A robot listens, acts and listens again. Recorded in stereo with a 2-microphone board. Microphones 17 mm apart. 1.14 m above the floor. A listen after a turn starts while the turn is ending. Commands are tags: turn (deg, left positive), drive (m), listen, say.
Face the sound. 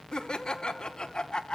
<turn deg="60"/>
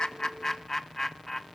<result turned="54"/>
<turn deg="25"/>
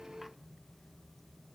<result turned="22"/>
<listen/>
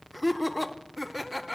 <say>Facing the laughter.</say>